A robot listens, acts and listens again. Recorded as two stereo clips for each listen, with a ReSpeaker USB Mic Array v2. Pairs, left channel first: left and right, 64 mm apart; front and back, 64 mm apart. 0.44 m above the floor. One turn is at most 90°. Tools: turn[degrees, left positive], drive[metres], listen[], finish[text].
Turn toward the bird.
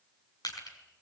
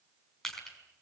Action: listen[]
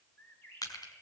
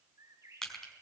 Thought: The bird: 155° left.
Action: turn[90]
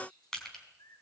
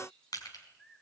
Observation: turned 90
Thought: The bird is now 80° left.
Action: turn[80]
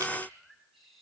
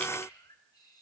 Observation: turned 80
Action: finish[Found it: a bird, straight ahead.]